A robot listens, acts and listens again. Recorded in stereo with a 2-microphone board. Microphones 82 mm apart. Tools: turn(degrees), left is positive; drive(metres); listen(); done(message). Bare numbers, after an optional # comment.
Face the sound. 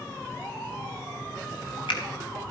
turn(90)
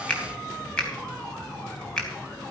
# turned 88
# So it is at 10° left.
turn(10)
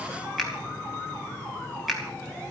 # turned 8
done("Found it: a finger snap, straight ahead.")